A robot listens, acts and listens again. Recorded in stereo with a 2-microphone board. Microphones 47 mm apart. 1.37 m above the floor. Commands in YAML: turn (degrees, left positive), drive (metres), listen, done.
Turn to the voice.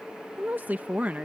turn: -35
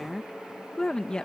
turn: 20
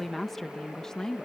turn: 15
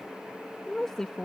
turn: 15
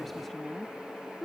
turn: 10
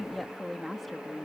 done: "Facing the woman speaking."